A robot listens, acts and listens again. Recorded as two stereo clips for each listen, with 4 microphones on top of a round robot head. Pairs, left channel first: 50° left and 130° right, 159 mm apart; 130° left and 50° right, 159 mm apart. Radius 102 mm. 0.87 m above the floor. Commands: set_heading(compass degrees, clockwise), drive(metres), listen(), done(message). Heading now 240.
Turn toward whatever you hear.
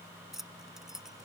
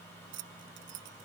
set_heading(285)
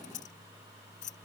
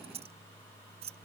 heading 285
done("Facing the keys jangling.")